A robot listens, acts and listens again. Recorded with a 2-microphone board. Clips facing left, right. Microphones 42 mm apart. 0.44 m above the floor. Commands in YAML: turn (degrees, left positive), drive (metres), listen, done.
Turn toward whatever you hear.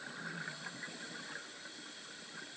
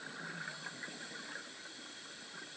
listen: true
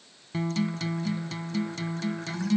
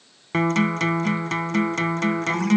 turn: -65
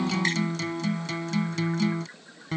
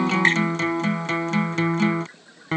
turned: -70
turn: -40
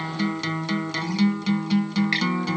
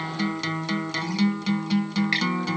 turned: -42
done: "Found it: a guitar, straight ahead."